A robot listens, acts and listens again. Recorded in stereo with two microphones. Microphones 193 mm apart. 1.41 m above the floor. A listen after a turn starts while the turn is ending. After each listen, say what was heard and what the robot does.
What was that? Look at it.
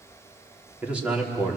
Turn 30° right.
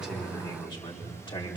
So it is at 25° left. Turn 25° left.
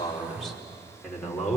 Facing the man speaking, over 4 m away.